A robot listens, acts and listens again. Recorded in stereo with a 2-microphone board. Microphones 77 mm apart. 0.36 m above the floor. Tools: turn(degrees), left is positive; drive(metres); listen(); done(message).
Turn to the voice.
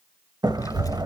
turn(degrees=50)
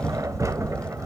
turn(degrees=15)
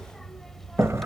done("Facing the child speaking, under 1 m away.")